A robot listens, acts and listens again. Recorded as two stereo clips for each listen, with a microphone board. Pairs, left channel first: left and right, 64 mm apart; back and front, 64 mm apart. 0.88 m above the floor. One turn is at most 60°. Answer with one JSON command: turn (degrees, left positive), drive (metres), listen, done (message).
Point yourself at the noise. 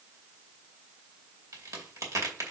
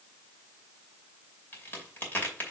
{"turn": -60}
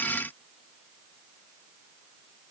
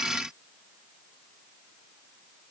{"turn": -60}
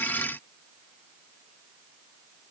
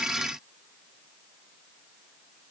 {"done": "Facing where the crack came from. I can't hear it now."}